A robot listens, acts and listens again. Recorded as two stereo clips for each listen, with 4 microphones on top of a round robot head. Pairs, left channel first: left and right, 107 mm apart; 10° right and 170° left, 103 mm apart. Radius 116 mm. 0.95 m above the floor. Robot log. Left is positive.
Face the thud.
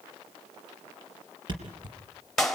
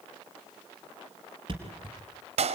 note: The thud: 135° right.
cmd yaw -135
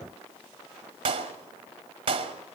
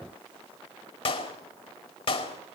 end: I heard a thud from this way, but can't make it out now.